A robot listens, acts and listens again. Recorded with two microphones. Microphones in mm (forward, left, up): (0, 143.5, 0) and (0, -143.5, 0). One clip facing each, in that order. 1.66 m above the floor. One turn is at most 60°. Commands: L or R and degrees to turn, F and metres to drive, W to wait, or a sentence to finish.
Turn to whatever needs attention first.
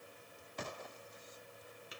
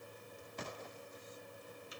W
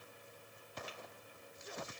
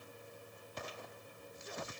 W
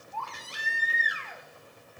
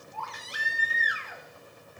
R20
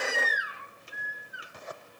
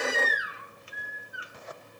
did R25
R60
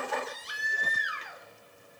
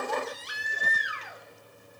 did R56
R60
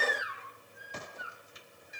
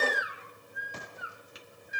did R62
R20
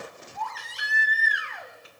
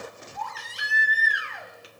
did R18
Found it: a baby crying, straight ahead, 1 to 2 m away.